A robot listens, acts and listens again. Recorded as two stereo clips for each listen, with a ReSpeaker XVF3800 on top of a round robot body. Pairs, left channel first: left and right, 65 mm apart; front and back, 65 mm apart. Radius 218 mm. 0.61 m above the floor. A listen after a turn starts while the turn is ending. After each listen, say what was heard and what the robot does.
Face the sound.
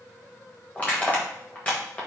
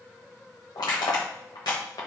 The crushing: 25° left. Turn 25° left.
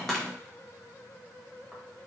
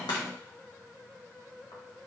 The crushing is now 10° left. Turn 10° left.
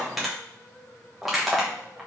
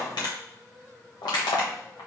Facing the crushing, 1 to 2 m away.